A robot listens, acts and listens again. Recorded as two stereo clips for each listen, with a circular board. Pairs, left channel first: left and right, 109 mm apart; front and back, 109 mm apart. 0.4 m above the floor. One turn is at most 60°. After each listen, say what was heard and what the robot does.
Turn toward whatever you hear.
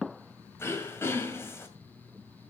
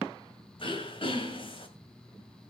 The throat clearing: 25° left. Turn 25° left.
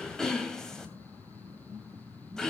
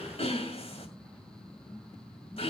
Facing the throat clearing.